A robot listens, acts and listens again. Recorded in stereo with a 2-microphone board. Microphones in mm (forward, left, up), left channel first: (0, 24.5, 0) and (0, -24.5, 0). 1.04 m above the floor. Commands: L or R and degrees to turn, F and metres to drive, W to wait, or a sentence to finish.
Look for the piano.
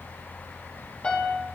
L25
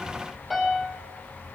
Facing the piano.